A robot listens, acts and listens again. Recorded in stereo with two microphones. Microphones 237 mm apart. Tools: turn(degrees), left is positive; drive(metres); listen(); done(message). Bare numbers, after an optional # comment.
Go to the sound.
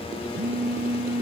# The phone buzzing: about 40° right or 140° right.
turn(-40)
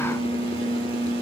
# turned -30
# So it is at 15° right.
turn(-15)
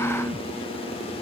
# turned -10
drive(1.0)
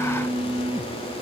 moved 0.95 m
drive(1.0)
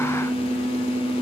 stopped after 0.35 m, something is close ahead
done("Arrived at the phone buzzing, straight ahead.")